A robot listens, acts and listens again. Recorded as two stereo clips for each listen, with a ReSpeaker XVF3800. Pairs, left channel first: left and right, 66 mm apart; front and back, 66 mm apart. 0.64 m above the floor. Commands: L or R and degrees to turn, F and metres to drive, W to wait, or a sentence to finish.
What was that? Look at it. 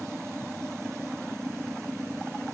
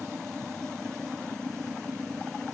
W
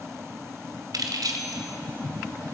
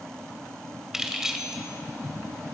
R95
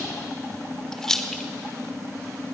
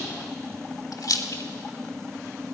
L10
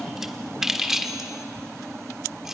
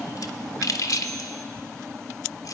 Facing the keys jangling.